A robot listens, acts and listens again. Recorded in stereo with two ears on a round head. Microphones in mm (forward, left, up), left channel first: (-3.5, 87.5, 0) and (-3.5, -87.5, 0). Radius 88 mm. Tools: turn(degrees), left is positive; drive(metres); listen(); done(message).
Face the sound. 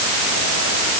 listen()
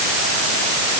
listen()
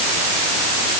done("I can't make out anything.")